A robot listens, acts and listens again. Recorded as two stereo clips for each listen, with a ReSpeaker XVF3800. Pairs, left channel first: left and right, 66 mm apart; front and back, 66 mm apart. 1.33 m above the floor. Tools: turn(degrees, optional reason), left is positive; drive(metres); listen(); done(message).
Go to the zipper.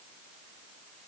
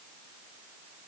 listen()
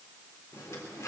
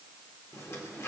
turn(degrees=45, reason="The zipper: 45° left.")
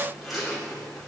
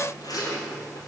drive(metres=1.0)
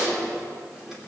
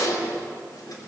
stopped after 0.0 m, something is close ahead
done("Something is in my way. I am facing the zipper but have not reached it.")